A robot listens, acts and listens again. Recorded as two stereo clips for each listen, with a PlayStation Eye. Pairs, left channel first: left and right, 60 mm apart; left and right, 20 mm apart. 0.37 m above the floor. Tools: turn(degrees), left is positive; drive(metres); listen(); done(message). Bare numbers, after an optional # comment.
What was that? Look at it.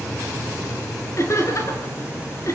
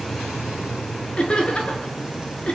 # The laughter: about 55° left or 125° left.
turn(55)
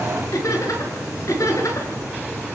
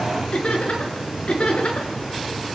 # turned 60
# So it is at 55° left.
turn(55)
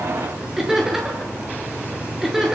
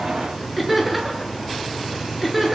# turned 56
done("Facing the laughter.")